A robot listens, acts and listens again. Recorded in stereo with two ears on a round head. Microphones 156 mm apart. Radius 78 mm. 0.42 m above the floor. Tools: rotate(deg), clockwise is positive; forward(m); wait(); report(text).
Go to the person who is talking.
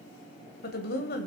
rotate(-60)
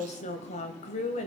rotate(-45)
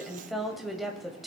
forward(1.0)
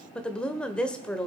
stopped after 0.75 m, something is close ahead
rotate(-10)
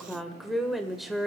report("Arrived at the woman speaking, straight ahead.")